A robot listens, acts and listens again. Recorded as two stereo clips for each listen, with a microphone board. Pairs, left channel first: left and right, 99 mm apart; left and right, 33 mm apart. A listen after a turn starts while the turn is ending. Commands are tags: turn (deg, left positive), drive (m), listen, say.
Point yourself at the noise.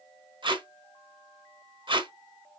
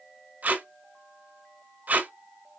<turn deg="-55"/>
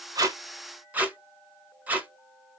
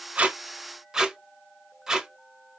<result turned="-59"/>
<turn deg="-20"/>
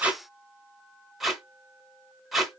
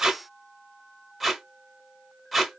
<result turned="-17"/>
<say>Found it: tape being pulled, straight ahead.</say>